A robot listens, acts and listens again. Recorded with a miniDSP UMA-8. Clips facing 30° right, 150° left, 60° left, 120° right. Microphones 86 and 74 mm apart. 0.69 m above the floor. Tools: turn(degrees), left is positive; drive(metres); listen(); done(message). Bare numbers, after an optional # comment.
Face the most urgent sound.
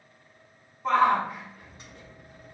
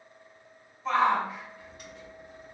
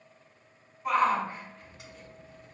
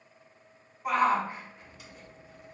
# The shout: 45° right.
turn(-45)
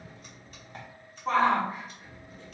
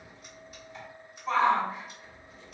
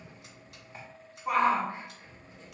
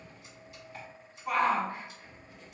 done("Facing the shout, 1 to 2 m away.")